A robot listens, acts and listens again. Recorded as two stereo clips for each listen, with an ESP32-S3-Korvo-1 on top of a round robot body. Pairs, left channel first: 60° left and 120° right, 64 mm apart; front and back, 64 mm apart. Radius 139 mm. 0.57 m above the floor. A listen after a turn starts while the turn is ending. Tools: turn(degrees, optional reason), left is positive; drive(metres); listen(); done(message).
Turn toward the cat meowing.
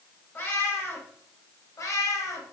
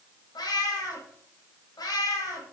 turn(degrees=25, reason="The cat meowing: 25° left.")
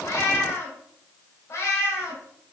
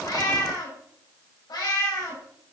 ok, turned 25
turn(degrees=20, reason="The cat meowing is now 20° left.")
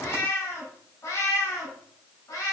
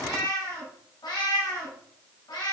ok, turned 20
turn(degrees=20, reason="The cat meowing is now 20° left.")
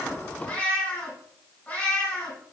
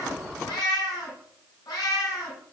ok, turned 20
done("Facing the cat meowing, 2 to 4 m away.")